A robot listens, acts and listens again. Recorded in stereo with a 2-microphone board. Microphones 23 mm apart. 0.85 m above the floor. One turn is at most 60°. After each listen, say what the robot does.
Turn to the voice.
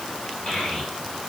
Turn 45° left.
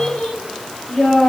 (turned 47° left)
Turn 60° left.
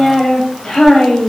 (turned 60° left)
Turn 30° left.
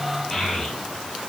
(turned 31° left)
Found it: a child speaking, straight ahead, 2 to 4 m away.